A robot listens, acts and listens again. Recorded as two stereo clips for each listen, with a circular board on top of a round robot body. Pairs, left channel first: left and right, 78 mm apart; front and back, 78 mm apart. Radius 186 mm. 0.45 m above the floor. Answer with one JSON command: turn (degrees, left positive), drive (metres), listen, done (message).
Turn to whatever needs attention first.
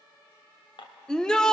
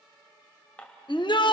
{"turn": 10}
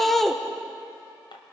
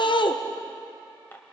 {"done": "Found it: a shout, straight ahead, 1 to 2 m away."}